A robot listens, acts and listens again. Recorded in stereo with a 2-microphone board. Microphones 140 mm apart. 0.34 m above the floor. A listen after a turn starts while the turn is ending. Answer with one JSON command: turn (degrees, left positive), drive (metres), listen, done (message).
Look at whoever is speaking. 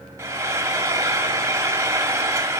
{"listen": true}
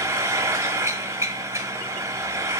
{"listen": true}
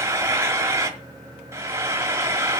{"done": "I can't make out anyone speaking to turn to."}